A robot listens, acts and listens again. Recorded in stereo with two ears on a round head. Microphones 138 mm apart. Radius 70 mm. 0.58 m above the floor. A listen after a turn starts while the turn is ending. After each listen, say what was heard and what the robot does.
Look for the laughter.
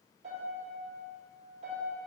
Keep listening.
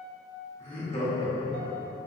The laughter: about 35° left or 145° left. Turn 35° left.
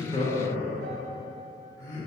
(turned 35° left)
The laughter: about 25° left or 155° left. Turn 25° left.
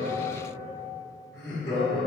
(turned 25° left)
The laughter: about 30° left or 150° left. Turn 30° left.
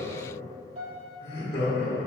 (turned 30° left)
The laughter: about 45° left or 135° left. Turn 45° left.
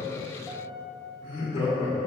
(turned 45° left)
So it is at 40° left. Turn 40° left.
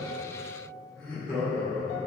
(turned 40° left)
The laughter is now 10° left. Turn 10° left.
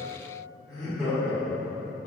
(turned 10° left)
Found it: laughter, straight ahead, 1 to 2 m away.